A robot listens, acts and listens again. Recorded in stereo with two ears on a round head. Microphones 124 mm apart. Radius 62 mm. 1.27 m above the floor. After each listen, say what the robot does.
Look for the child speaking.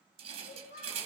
Turn 60° left.
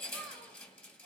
Keep listening.
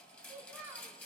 Turn 15° right.
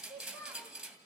Turn 10° right.
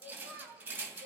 Turn 20° right.
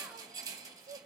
Turn 20° right.
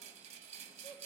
Keep listening.
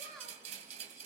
Facing the child speaking.